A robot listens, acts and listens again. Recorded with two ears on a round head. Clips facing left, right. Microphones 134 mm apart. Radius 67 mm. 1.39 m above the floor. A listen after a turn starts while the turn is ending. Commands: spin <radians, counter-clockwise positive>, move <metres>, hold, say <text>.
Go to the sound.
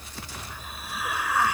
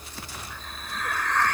spin 0.52
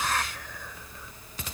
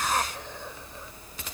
spin -0.44
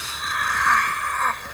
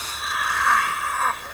move 1.0
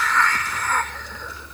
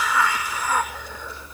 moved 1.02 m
spin -0.17
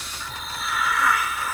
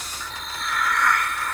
move 1.0
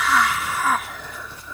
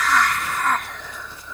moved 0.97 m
move 1.0
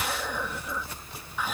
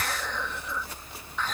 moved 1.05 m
spin 0.17
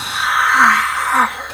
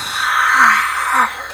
move 1.0
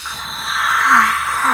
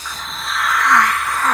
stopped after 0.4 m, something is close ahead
say Arrived at the hiss, straight ahead.